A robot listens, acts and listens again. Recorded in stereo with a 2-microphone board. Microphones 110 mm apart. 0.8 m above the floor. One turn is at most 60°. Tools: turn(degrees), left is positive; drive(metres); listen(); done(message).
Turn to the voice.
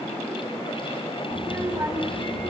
turn(degrees=-20)
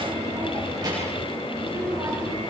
turn(degrees=-30)
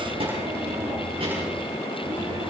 turn(degrees=-60)
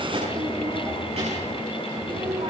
turn(degrees=-60)
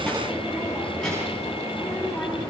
done("Found it: a child speaking, straight ahead, over 4 m away.")